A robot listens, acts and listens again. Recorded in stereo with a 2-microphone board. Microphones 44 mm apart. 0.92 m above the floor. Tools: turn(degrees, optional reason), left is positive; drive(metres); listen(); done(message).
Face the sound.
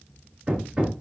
turn(degrees=-20, reason="The hammering: about 20° right or 160° right.")
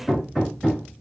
done("Facing the hammering.")